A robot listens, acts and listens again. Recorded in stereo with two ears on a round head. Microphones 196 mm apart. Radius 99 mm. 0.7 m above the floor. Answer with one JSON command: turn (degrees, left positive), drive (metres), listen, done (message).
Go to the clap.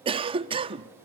{"listen": true}
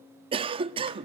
{"listen": true}
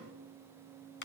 {"turn": 55}
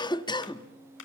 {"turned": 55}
{"turn": 65}
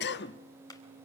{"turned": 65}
{"turn": 15}
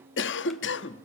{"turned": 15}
{"listen": true}
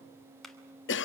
{"drive": 1.0}
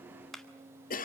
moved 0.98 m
{"drive": 1.0}
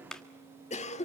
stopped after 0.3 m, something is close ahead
{"done": "I am next to the clap."}